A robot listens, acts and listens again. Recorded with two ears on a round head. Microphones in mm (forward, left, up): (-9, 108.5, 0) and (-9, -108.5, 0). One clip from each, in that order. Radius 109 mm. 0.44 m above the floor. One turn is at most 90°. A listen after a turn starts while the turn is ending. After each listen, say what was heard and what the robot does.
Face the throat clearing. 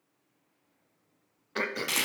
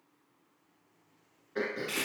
Turn 90° left.
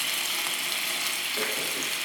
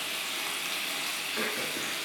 Keep listening.
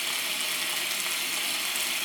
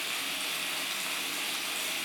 Keep listening.
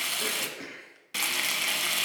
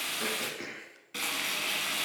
Facing the throat clearing, under 1 m away.